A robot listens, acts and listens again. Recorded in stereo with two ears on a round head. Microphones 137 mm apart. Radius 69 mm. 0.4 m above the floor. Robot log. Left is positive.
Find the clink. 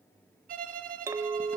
note: The clink: about 25° right or 155° right.
cmd yaw -25
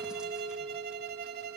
note: So it is at 130° right.
cmd yaw -130
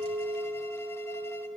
note: The clink is now 25° right.
cmd yaw -25
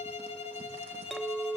end: Found it: a clink, straight ahead.